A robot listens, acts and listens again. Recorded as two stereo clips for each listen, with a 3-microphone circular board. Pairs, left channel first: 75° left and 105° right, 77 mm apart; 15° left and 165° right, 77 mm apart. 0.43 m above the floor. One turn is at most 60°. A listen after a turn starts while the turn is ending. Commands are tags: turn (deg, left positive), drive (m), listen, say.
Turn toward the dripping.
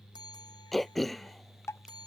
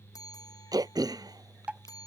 <turn deg="60"/>
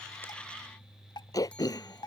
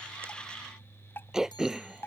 <turn deg="60"/>
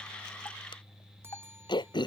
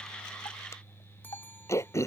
<turn deg="25"/>
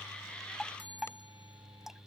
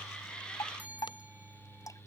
<turn deg="-20"/>
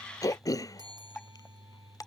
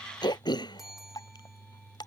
<say>Facing the dripping.</say>